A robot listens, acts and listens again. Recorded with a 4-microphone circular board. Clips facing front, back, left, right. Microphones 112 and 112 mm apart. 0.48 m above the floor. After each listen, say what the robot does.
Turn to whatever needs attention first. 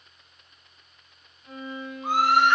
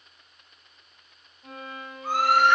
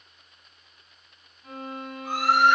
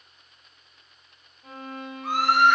Turn 70° right.
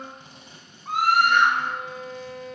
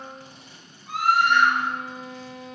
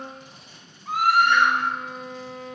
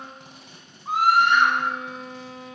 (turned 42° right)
Turn 25° right.
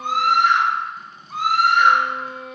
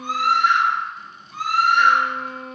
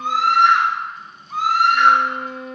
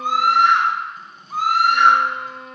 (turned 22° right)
Found it: a scream, straight ahead.